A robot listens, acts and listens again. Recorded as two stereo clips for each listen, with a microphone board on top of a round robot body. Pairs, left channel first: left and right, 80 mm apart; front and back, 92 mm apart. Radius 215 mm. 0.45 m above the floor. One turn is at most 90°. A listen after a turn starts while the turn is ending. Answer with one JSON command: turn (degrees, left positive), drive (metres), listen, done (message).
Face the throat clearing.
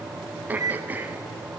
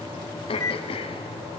{"turn": -20}
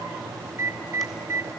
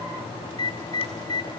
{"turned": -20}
{"listen": true}
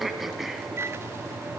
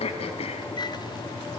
{"done": "Found it: throat clearing, straight ahead."}